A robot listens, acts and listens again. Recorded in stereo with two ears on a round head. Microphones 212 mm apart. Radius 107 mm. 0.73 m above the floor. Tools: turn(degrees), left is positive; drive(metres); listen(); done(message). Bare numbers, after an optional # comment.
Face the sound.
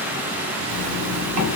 turn(-90)
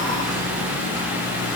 listen()
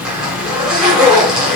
done("Found it: a zipper, straight ahead, 1 to 2 m away.")